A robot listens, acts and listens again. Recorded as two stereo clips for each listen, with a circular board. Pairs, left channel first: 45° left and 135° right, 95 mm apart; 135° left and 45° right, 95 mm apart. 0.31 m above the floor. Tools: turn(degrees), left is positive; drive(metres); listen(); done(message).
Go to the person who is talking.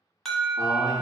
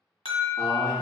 turn(degrees=-90)
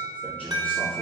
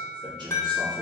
turn(degrees=-30)
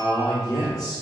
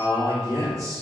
drive(metres=1.0)
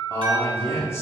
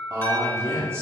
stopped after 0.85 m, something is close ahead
done("I am next to the man speaking.")